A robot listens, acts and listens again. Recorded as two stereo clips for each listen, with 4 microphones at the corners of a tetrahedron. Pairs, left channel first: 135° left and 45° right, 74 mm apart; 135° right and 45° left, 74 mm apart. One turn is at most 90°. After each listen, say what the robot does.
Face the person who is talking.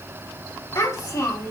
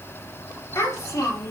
Turn 90° left.
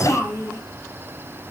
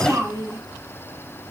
Turn 85° left.
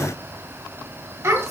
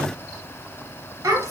Facing the child speaking.